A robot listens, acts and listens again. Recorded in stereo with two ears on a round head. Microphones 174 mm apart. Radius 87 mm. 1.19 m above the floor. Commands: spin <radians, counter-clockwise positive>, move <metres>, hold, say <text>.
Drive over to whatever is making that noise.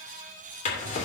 spin 0.70
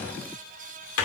spin 1.75
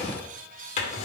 spin 0.61
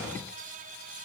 spin -0.26
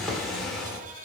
move 1.0
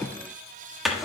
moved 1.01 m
move 1.0
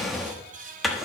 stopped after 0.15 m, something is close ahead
say Arrived at the drawer, straight ahead.